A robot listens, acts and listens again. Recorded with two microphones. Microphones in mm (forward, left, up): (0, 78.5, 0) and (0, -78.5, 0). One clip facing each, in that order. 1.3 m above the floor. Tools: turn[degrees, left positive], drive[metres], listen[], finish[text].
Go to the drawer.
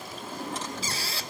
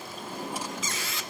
Action: turn[-30]
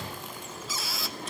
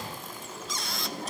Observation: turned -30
Thought: So it is at 140° right.
Action: turn[-140]
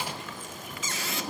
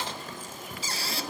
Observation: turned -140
Thought: The drawer is now 10° left.
Action: turn[10]
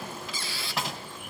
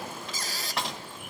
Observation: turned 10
Action: drive[1.0]
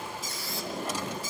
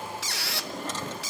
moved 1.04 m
Thought: The drawer is now 10° left.
Action: turn[10]
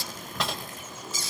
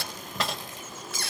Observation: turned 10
Action: drive[1.0]
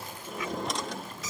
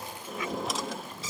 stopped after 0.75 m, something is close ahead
Action: finish[I am next to the drawer.]